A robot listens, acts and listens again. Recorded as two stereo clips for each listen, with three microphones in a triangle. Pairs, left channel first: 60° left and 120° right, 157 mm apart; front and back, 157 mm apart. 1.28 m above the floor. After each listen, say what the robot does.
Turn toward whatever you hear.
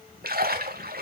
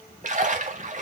Turn 140° right.
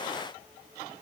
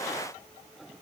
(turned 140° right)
Facing where the splash came from. I can't hear it now.